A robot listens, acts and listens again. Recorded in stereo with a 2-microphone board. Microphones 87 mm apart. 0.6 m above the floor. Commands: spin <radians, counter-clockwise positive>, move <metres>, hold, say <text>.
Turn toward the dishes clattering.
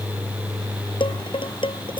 spin 1.57
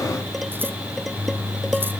hold
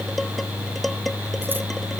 hold
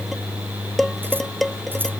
say Found it: dishes clattering, straight ahead.